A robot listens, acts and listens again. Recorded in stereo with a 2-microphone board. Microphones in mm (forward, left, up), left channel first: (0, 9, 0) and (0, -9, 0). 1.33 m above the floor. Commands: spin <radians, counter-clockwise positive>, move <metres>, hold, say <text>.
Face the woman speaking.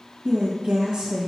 spin -1.57
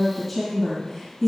say Found it: a woman speaking, straight ahead.